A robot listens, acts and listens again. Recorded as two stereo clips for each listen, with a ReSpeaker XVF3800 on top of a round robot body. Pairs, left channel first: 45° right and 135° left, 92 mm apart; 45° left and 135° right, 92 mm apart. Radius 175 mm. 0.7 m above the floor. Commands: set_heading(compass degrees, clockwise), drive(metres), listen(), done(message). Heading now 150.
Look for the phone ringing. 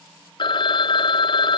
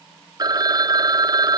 set_heading(235)
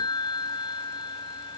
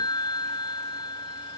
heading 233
done("Found it: a phone ringing, straight ahead.")